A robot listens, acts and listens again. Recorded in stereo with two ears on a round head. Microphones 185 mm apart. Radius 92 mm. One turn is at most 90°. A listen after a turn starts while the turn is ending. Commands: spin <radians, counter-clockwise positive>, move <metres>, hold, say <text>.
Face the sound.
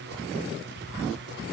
hold
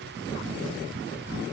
hold
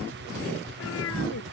spin 1.22
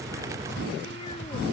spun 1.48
hold
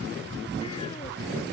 hold
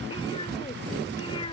spin 0.44
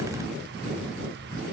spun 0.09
spin 0.35
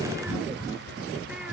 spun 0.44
hold
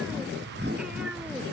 say I heard a cat meowing from this way, but can't make it out now.